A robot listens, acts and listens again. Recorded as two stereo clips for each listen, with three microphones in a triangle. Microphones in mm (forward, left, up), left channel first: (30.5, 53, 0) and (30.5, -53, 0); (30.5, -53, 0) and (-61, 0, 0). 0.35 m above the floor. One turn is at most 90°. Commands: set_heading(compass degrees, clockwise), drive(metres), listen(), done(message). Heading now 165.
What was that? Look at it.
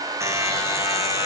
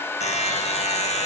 set_heading(190)
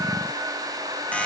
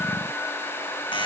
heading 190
listen()
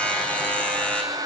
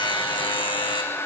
set_heading(180)
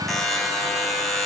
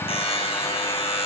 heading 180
done("Found it: a buzzer, straight ahead, over 4 m away.")